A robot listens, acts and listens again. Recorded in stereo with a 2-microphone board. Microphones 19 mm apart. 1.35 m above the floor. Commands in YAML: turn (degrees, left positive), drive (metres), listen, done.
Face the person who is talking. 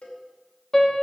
listen: true
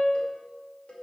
listen: true
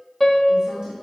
turn: -40
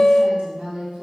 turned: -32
turn: -105
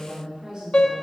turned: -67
turn: -40
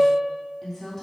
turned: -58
turn: 15
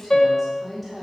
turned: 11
done: "Facing the woman speaking, 2 to 4 m away."